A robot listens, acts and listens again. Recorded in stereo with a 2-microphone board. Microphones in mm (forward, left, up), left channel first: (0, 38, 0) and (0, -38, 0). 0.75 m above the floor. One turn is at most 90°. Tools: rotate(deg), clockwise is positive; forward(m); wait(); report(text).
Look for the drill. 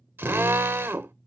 rotate(30)
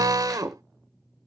rotate(90)
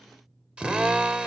rotate(15)
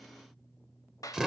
report("Found it: a drill, straight ahead, under 1 m away.")